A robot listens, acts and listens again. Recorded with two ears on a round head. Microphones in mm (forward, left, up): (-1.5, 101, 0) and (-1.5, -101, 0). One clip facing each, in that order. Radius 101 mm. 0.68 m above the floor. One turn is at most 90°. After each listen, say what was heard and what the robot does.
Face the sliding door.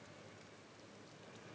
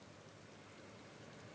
Keep listening.
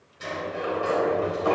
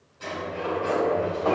The sliding door: about 25° left or 155° left. Turn 25° left.
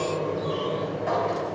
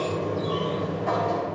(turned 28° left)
Facing the sliding door.